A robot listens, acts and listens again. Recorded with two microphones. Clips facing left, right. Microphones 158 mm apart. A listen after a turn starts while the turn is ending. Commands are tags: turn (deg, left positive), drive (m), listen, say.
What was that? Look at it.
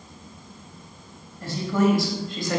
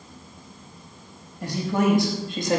<turn deg="-25"/>
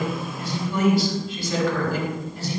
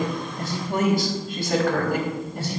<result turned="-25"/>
<turn deg="-120"/>
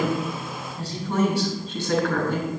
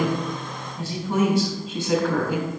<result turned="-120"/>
<turn deg="-15"/>
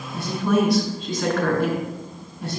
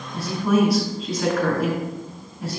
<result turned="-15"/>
<turn deg="-10"/>
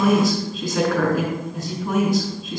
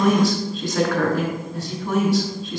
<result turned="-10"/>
<say>Facing the woman speaking, over 4 m away.</say>